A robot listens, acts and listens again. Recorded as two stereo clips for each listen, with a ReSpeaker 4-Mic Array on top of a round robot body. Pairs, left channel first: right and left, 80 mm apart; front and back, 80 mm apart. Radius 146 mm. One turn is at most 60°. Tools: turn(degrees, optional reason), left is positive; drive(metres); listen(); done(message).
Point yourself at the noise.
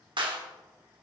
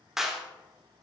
turn(degrees=60, reason="The clap: 95° left.")
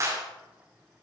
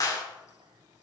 turn(degrees=40, reason="The clap is now 40° left.")
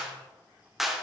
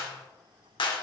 done("Found it: a clap, straight ahead.")